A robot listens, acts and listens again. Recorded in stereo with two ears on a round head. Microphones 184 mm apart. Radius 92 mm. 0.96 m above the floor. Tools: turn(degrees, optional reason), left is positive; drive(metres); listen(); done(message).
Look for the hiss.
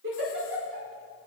listen()
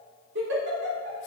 listen()
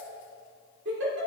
done("I can't make out a hiss, only a giggle.")